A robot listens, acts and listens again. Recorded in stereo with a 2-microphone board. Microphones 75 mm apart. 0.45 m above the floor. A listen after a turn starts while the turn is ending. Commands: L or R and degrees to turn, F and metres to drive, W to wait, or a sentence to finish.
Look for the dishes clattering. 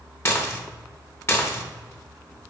L35
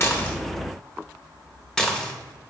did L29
L10
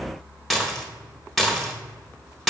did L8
Found it: dishes clattering, straight ahead.